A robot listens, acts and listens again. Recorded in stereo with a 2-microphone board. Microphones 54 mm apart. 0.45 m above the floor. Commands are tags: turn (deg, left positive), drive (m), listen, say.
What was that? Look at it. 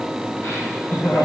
<turn deg="40"/>
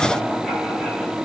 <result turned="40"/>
<listen/>
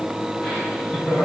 <say>Found it: laughter, straight ahead, over 4 m away.</say>